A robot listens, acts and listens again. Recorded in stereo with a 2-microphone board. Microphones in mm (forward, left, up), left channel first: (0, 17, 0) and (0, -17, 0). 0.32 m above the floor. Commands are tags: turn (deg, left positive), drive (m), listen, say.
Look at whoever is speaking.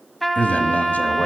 <turn deg="55"/>
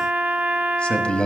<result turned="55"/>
<turn deg="40"/>
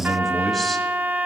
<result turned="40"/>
<say>Found it: a man speaking, straight ahead.</say>